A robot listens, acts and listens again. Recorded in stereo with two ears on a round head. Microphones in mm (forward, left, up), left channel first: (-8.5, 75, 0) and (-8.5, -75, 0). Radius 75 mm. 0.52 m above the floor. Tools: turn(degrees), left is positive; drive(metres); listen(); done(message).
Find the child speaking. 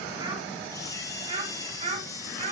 turn(degrees=-40)
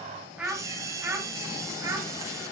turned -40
turn(degrees=-20)
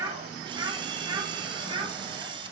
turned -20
turn(degrees=-30)
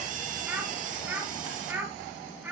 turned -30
turn(degrees=-10)
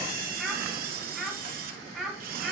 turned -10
done("Facing the child speaking, 2 to 4 m away.")